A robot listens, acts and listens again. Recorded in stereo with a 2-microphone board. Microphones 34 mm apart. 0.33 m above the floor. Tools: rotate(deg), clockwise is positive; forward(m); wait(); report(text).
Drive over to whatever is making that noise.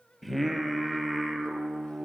rotate(-30)
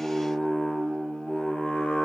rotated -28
rotate(-150)
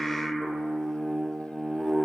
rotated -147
forward(1.0)
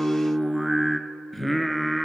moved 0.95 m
forward(1.0)
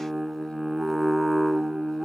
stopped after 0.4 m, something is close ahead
report("I am next to the singing.")